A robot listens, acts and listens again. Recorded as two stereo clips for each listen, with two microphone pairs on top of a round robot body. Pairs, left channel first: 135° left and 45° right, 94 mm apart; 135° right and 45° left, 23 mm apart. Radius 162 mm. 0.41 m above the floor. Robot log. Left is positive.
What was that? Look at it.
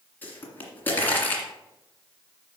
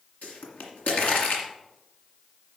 note: The pop: 155° right.
cmd yaw -155
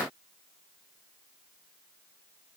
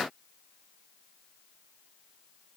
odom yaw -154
end: I heard a pop from this way, but can't make it out now.